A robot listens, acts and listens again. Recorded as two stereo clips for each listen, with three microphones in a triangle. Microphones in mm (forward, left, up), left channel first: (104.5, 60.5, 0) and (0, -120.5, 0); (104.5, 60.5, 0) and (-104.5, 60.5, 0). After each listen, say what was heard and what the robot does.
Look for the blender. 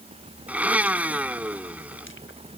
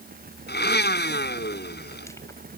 The blender: 35° right. Turn 35° right.
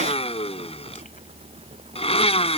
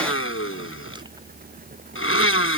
Facing the blender.